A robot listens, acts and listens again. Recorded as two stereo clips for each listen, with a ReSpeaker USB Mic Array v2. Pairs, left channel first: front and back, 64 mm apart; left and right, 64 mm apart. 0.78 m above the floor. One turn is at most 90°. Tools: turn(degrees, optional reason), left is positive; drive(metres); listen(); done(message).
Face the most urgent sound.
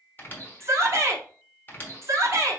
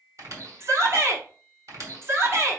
turn(degrees=-90, reason="The shout: 135° right.")
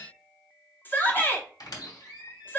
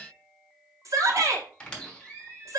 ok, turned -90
turn(degrees=-60, reason="The shout is now 60° right.")
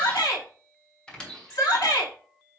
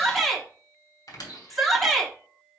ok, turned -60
done("Facing the shout.")